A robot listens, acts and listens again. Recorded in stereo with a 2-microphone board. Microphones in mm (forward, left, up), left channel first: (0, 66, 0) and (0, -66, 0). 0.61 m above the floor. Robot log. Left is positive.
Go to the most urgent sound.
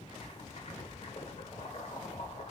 cmd idle
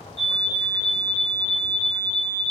cmd yaw +30
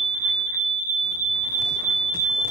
note: So it is at 25° right.
cmd yaw -25
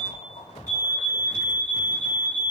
note: The fire alarm is now 15° left.
cmd yaw +15
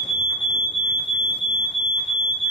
cmd fwd 1.0
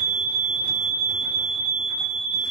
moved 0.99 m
cmd fwd 1.0
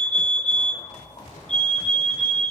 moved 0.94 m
note: The fire alarm is now 15° left.
cmd yaw +15
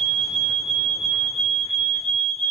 cmd fwd 1.0
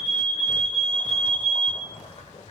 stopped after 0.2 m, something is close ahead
end: Arrived at the fire alarm, straight ahead.